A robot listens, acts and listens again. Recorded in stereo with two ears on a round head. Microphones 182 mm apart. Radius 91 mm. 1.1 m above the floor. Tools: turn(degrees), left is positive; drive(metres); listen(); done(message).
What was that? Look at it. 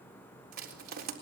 turn(degrees=-50)
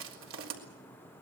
turn(degrees=-75)
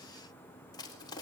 turn(degrees=20)
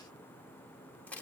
turn(degrees=10)
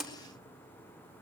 done("Found it: crushing, straight ahead, 2 to 4 m away.")